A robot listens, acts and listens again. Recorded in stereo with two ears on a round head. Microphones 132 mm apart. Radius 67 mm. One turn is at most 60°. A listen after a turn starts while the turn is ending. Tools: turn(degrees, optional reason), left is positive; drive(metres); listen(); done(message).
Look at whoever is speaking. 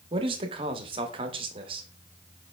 turn(degrees=-35, reason="The man speaking: about 35° right or 145° right.")
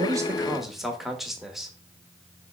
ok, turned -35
done("Found it: a man speaking, straight ahead.")